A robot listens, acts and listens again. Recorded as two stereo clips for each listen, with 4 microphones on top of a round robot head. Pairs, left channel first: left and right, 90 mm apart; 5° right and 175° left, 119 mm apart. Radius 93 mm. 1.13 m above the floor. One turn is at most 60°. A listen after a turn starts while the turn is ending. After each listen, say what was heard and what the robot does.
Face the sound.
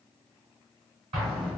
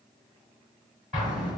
The explosion: 100° right. Turn 60° right.
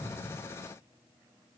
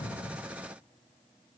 Nothing new. It was at 40° right. Turn 40° right.
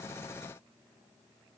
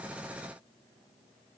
Facing where the explosion came from. I can't hear it now.